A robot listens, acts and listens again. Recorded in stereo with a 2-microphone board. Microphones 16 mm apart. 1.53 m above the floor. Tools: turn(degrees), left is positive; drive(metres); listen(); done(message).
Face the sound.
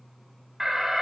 turn(degrees=-20)
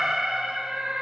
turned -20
turn(degrees=-135)
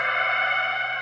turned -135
done("Found it: an alarm, straight ahead.")